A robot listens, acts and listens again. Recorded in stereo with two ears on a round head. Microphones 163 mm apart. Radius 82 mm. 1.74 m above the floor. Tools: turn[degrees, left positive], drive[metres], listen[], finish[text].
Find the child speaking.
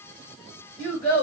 Thought: The child speaking: about 40° left or 140° left.
Action: turn[40]
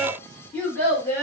Thought: So it is at 15° left.
Action: turn[15]
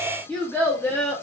Thought: The child speaking is now 15° left.
Action: turn[15]
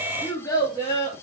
Thought: The child speaking is now 25° left.
Action: turn[25]
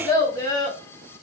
Thought: The child speaking is now 25° left.
Action: turn[25]
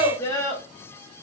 Thought: The child speaking is now 15° left.
Action: turn[15]
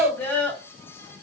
Thought: The child speaking is now 10° left.
Action: turn[10]
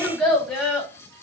Action: finish[Facing the child speaking.]